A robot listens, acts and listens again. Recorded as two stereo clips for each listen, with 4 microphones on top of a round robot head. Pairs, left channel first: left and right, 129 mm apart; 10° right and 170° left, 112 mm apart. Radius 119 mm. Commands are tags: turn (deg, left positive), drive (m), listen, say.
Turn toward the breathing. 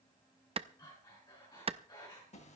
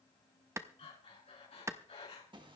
<turn deg="25"/>
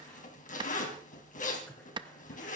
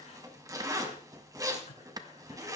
<turn deg="10"/>
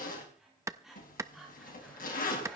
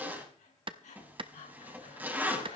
<say>Facing the breathing.</say>